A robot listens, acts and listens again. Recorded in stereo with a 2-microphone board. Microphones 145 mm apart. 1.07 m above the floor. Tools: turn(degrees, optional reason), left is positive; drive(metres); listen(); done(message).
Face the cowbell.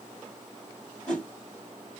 listen()
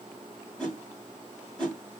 listen()
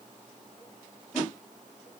done("I can't make out a cowbell, only a whoosh.")